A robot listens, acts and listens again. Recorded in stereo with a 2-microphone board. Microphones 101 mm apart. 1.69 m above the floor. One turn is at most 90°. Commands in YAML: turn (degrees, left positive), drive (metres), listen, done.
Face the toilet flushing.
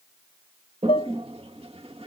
turn: -70
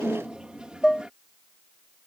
turn: -10
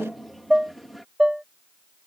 done: "Facing the toilet flushing."